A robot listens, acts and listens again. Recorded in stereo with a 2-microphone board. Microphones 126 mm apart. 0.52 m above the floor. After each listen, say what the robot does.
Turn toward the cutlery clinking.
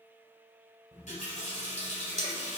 Turn 60° right.
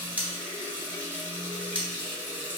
Turn 15° right.
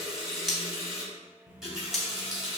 Found it: cutlery clinking, straight ahead, under 1 m away.